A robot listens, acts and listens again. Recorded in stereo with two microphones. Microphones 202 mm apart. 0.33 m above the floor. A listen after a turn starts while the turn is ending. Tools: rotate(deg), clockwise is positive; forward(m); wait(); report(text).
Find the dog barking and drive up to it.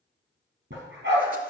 rotate(70)
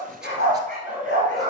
rotate(40)
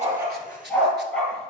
forward(1.0)
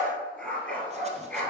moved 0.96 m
rotate(-10)
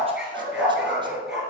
forward(1.0)
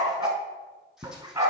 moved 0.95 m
rotate(15)
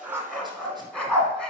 forward(1.0)
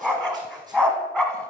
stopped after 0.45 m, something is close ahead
report("I am next to the dog barking.")